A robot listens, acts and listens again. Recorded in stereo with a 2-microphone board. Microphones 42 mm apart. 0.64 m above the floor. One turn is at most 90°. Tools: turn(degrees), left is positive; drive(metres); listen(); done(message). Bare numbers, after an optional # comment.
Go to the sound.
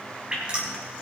# The dripping: about 25° right or 155° right.
turn(-25)
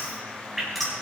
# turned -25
drive(1.0)
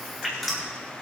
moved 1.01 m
drive(1.0)
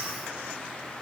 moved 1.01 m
listen()
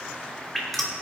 drive(1.0)
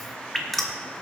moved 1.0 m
drive(1.0)
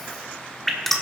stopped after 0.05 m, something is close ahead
# The dripping is now 10° left.
turn(10)
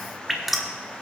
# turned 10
done("Arrived at the dripping, straight ahead.")